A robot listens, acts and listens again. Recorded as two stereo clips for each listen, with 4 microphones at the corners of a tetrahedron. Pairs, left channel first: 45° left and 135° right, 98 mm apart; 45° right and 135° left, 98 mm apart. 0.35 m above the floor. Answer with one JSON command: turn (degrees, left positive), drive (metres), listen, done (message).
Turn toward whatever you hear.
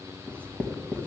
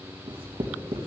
{"turn": 120}
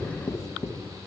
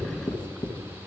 {"turn": -15}
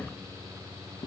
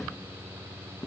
{"listen": true}
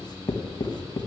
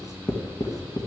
{"done": "Found it: writing, straight ahead."}